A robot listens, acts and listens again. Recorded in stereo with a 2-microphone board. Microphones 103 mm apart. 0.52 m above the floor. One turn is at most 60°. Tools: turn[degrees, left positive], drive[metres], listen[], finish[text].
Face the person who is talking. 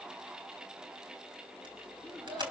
Action: turn[30]
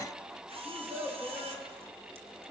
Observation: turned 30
Thought: So it is at 25° right.
Action: turn[-25]
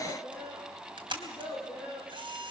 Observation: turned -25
Action: finish[Facing the child speaking, over 4 m away.]